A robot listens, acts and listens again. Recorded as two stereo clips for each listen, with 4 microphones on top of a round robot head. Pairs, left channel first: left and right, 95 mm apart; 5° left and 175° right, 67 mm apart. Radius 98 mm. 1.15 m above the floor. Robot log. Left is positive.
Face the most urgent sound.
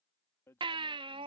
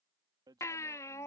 note: The baby crying: 55° right.
cmd yaw -55
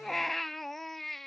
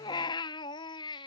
end: Facing the baby crying.